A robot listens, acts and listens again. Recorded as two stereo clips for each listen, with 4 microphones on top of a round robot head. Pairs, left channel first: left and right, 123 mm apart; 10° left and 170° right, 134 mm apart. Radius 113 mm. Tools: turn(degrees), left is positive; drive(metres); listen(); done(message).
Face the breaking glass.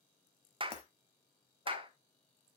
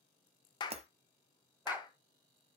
turn(degrees=145)
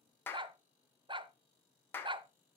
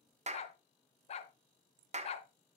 done("Facing where the breaking glass came from. I can't hear it now.")